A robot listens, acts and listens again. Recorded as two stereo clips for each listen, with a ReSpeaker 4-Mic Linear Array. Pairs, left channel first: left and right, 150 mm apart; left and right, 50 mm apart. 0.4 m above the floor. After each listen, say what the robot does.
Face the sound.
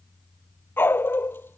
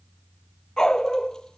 Turn 30° left.
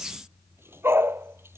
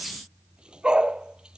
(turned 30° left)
Turn 15° right.
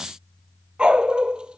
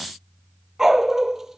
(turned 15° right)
Found it: a dog barking, straight ahead.